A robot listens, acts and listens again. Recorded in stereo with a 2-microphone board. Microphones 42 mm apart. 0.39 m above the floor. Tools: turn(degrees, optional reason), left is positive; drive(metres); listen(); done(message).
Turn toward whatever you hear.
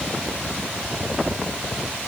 listen()
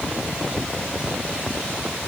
listen()
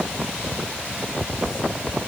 done("I can't make out anything to turn to.")